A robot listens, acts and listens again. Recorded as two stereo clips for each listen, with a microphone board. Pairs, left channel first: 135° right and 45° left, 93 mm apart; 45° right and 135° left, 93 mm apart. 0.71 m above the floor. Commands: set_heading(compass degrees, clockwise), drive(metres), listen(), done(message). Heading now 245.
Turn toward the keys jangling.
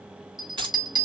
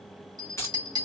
set_heading(230)
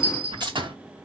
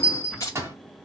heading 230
set_heading(220)
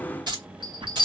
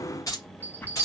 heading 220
set_heading(210)
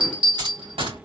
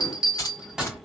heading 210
done("Facing the keys jangling.")